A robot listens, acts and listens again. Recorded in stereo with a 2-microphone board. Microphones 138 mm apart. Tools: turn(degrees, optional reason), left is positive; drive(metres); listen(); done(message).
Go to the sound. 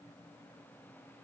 listen()
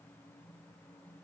listen()
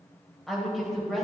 turn(degrees=30)
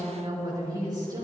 turn(degrees=-30, reason="So it is at 30° right.")
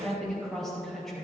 drive(metres=1.0)
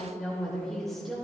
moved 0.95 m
drive(metres=1.0)
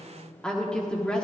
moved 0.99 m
turn(degrees=10, reason="The woman speaking is now 10° left.")
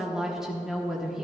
drive(metres=1.0)
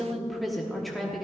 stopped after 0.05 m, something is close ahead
done("Arrived at the woman speaking, straight ahead.")